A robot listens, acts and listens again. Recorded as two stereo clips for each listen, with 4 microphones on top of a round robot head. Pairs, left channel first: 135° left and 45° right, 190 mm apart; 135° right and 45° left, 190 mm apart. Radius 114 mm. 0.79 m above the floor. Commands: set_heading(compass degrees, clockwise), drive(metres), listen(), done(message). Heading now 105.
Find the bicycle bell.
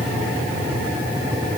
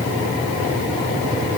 listen()
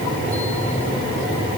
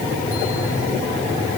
listen()
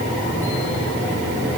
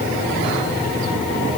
done("I can't make out a bicycle bell to turn to.")